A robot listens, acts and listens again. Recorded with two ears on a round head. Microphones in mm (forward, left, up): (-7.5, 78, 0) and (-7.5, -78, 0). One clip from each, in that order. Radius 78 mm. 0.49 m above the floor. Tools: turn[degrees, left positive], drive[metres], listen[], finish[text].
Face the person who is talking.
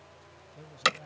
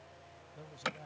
Thought: The man speaking: about 15° right or 165° right.
Action: turn[-15]
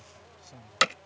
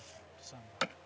Thought: So it is at 150° right.
Action: turn[-150]
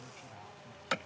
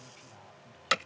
Action: listen[]
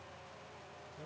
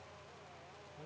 Action: listen[]
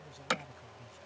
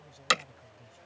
Action: finish[Found it: a man speaking, straight ahead.]